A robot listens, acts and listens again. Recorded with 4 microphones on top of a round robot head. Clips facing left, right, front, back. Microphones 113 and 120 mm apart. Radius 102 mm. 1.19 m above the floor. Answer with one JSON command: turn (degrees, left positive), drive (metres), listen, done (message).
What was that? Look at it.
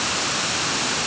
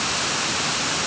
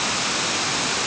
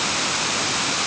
{"listen": true}
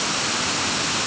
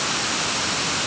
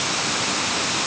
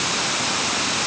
{"listen": true}
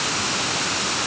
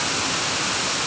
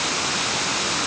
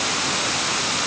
{"done": "I can't make out anything."}